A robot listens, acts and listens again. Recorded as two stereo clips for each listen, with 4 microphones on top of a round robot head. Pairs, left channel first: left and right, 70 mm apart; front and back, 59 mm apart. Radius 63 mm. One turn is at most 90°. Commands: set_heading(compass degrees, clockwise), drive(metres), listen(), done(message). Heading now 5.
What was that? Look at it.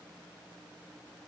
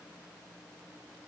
listen()
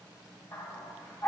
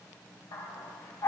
set_heading(340)
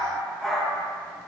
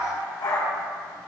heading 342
done("Facing the dog barking, 2 to 4 m away.")